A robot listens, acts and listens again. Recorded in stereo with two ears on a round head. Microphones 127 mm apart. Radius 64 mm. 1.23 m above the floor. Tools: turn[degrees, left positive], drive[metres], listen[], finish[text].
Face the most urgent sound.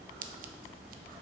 Action: listen[]
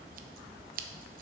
Action: listen[]
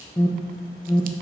Thought: The alarm: about 25° left or 155° left.
Action: turn[25]
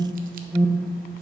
Action: finish[Facing the alarm.]